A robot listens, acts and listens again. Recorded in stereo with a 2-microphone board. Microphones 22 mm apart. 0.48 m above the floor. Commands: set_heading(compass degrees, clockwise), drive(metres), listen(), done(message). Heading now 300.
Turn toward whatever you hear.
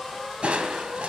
set_heading(30)
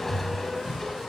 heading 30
done("Found it: crushing, straight ahead.")